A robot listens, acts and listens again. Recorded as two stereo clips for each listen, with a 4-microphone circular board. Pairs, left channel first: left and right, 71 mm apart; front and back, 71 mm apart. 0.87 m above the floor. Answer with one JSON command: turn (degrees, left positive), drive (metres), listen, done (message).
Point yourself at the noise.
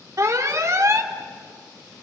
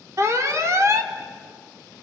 {"turn": -130}
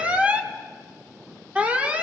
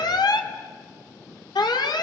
{"turn": -15}
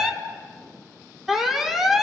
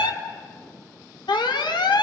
{"done": "Found it: an alarm, straight ahead, 1 to 2 m away."}